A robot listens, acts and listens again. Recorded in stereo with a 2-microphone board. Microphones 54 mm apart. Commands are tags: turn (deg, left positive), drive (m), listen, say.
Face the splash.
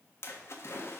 <turn deg="55"/>
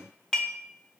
<listen/>
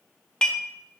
<say>I heard a splash, but can't make it out now. It was about straight ahead or 70° left.</say>